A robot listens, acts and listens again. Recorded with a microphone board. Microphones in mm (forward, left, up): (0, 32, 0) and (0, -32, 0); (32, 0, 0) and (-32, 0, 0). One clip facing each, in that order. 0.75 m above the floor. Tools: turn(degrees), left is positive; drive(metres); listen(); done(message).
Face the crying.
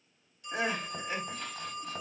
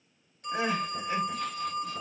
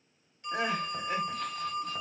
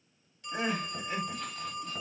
turn(degrees=15)
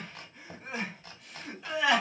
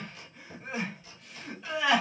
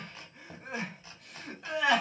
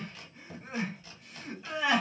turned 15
done("Found it: crying, straight ahead, 1 to 2 m away.")